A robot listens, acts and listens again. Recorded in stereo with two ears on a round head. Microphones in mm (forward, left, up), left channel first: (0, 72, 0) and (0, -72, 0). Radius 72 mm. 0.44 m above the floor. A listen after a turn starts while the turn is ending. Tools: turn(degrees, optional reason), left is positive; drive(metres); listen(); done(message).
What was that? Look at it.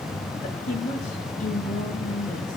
turn(degrees=50, reason="The woman speaking: about 50° left or 130° left.")
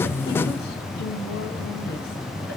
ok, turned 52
listen()
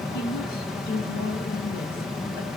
turn(degrees=65, reason="So it is at 65° left.")
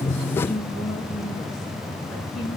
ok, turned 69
done("Facing the woman speaking, over 4 m away.")